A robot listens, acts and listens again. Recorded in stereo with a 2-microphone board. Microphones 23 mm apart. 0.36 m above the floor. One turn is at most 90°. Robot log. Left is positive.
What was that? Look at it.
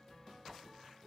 cmd idle
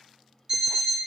note: The alarm clock: about 30° right or 150° right.
cmd yaw -30
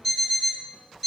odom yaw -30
end: Found it: an alarm clock, straight ahead.